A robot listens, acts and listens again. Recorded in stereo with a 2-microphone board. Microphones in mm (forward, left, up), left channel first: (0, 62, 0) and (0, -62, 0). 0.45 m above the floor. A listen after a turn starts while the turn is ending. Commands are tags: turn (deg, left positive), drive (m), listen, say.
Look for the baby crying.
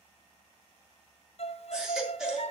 <turn deg="-30"/>
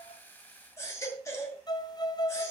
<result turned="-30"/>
<turn deg="25"/>
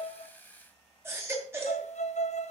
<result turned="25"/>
<turn deg="-20"/>
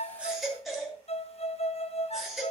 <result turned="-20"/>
<say>Facing the baby crying, 2 to 4 m away.</say>